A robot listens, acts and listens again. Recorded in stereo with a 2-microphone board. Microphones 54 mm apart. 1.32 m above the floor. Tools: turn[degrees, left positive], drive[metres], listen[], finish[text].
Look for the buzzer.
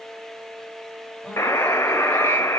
Thought: The buzzer: about 70° left or 110° left.
Action: turn[70]
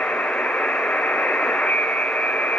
Thought: So it is at 30° left.
Action: turn[30]
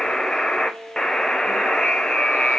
Thought: The buzzer is now 15° left.
Action: turn[15]
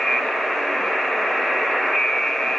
Action: finish[Facing the buzzer.]